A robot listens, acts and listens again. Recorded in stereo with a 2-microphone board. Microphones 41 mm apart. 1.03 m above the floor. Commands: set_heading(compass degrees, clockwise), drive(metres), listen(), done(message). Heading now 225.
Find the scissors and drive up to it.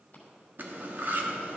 listen()
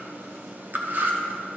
listen()
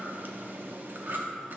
done("I can't make out scissors to turn to.")